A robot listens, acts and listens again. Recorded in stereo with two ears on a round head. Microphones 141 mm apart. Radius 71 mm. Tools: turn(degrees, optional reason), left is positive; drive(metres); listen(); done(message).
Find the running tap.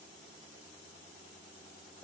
listen()
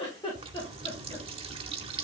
turn(degrees=-35, reason="The running tap: about 35° right or 145° right.")
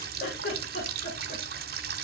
turn(degrees=-105, reason="So it is at 105° right.")
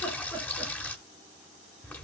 turn(degrees=10, reason="The running tap is now 10° left.")
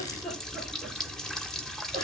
done("Facing the running tap, 1 to 2 m away.")